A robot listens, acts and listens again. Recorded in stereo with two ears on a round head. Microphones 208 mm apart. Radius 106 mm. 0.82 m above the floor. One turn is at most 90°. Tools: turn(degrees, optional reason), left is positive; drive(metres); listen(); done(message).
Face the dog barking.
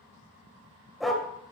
turn(degrees=30)
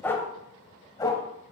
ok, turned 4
turn(degrees=20, reason="The dog barking: about 20° left or 160° left.")
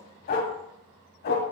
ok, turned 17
turn(degrees=90, reason="So it is at 130° left.")
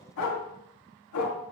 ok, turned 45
turn(degrees=80, reason="The dog barking is now 80° left.")
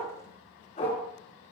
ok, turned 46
turn(degrees=30, reason="The dog barking is now 30° left.")
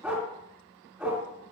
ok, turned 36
done("Found it: a dog barking, straight ahead.")